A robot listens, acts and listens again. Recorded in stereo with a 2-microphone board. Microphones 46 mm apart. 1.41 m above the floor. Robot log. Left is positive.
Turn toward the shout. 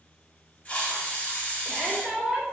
cmd yaw -30
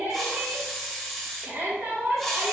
note: So it is at 140° right.
cmd yaw -140
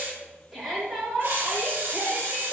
end: Found it: a shout, straight ahead.